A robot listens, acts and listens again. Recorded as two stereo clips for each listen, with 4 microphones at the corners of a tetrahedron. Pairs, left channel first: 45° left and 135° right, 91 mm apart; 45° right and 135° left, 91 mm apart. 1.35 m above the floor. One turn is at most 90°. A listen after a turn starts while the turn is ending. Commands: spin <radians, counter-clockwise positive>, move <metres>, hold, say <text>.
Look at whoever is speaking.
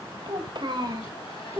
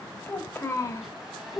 spin -1.57
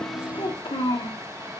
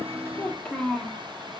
spin 0.70
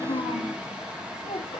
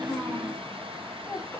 spin 0.44
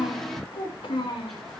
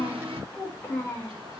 spin 0.35
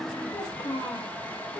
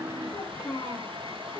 say Found it: a child speaking, straight ahead, 2 to 4 m away.